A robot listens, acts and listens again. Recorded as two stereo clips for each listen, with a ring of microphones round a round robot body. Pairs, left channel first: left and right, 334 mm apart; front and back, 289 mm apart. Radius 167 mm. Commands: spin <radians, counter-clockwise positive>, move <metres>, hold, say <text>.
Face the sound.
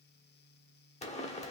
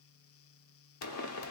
spin 0.35
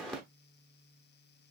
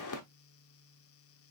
say Found it: a pop, straight ahead, under 1 m away.